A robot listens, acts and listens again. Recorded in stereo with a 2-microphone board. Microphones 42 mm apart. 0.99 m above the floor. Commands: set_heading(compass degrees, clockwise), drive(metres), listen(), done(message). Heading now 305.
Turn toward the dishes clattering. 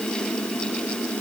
listen()
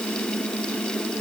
listen()
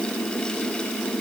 done("I can't make out dishes clattering to turn to.")